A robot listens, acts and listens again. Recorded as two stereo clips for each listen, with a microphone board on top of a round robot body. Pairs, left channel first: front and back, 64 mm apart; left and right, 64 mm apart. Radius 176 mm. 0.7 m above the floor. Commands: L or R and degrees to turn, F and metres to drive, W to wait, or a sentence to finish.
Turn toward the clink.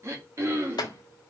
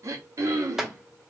Found it: a clink, straight ahead.